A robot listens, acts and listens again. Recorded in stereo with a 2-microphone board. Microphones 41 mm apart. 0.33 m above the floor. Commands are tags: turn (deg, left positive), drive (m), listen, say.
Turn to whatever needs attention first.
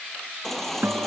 <turn deg="30"/>
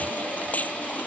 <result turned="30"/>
<turn deg="150"/>
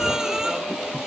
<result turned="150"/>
<turn deg="-10"/>
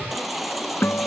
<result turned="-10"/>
<say>Found it: a baby crying, straight ahead.</say>